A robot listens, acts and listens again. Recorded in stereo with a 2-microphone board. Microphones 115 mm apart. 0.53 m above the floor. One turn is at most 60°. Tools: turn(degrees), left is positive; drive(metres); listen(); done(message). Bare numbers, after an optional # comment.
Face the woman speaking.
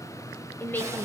# The woman speaking: about 20° left or 160° left.
turn(20)
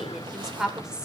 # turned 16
turn(-30)
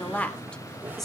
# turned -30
done("Facing the woman speaking, 1 to 2 m away.")